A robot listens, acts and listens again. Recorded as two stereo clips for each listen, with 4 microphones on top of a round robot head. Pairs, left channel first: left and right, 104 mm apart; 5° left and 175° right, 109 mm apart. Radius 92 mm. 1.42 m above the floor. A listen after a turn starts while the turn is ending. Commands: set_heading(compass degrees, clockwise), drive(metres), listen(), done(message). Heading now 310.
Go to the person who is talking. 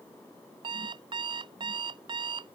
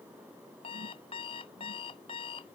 listen()
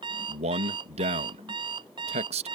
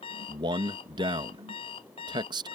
set_heading(70)
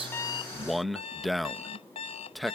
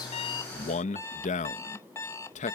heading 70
drive(1.0)
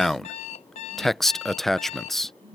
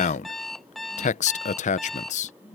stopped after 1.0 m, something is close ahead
done("Arrived at the man speaking, straight ahead.")